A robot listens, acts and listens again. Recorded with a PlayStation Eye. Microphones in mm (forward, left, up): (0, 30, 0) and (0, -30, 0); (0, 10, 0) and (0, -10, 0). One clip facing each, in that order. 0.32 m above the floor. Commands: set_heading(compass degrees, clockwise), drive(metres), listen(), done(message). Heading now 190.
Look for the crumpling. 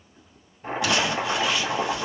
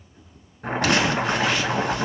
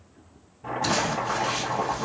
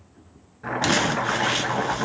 set_heading(245)
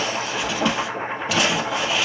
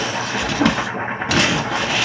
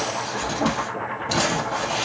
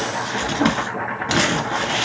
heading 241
set_heading(316)
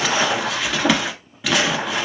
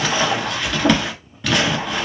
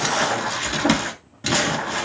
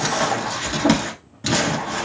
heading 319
done("Facing the crumpling, 1 to 2 m away.")